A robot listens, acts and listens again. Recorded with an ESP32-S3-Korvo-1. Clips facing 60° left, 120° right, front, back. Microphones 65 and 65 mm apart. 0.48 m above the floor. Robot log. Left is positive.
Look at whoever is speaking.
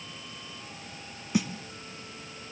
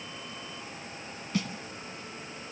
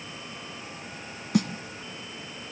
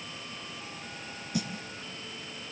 cmd idle
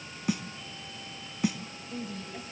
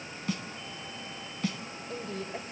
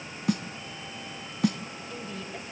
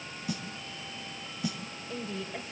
note: The woman speaking: 100° right.
cmd yaw -100
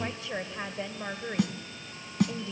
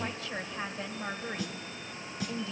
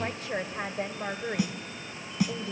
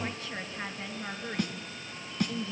end: Facing the woman speaking, 2 to 4 m away.